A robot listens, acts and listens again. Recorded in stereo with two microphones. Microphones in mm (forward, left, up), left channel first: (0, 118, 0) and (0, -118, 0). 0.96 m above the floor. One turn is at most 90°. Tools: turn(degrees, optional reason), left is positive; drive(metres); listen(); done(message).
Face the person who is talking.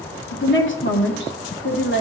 turn(degrees=55, reason="The woman speaking: about 55° left or 125° left.")
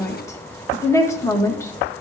turn(degrees=15, reason="So it is at 15° left.")
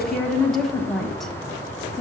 done("Found it: a woman speaking, straight ahead, 1 to 2 m away.")